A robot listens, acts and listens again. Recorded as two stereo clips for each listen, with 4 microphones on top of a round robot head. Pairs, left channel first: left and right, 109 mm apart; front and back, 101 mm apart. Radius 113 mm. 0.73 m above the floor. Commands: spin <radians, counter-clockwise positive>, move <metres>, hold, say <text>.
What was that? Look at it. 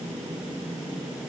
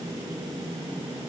hold
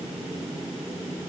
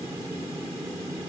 hold
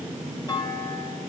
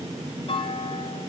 spin 0.61
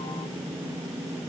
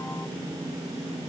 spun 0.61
say Facing where the clunk came from. I can't hear it now.